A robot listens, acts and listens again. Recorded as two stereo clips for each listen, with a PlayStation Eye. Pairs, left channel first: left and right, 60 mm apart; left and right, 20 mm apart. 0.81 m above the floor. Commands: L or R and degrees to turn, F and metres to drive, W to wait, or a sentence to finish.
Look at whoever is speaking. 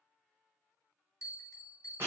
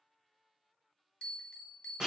W
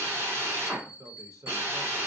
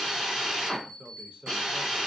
R65
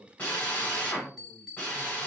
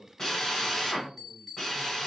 R25
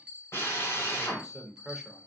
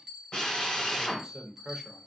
Found it: a man speaking, straight ahead, under 1 m away.